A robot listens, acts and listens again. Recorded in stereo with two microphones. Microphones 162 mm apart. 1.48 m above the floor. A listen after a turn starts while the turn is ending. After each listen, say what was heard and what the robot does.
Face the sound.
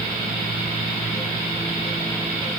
Keep listening.
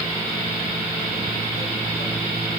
Keep listening.
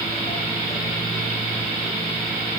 I can't make out anything to turn to.